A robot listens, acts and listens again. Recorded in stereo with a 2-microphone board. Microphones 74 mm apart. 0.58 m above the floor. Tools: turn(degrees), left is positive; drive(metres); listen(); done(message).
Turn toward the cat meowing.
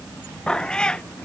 turn(degrees=30)
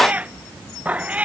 turn(degrees=-20)
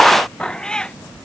turn(degrees=10)
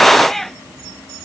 done("Found it: a cat meowing, straight ahead.")